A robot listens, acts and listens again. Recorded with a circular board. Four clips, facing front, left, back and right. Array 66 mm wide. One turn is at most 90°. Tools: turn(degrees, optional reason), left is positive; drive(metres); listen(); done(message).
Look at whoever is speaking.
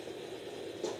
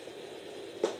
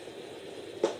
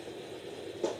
listen()
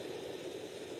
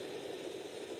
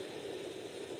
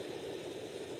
listen()
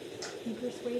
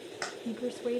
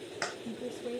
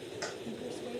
turn(degrees=75, reason="The woman speaking: 75° left.")
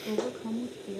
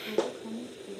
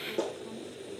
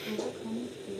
done("Found it: a woman speaking, straight ahead.")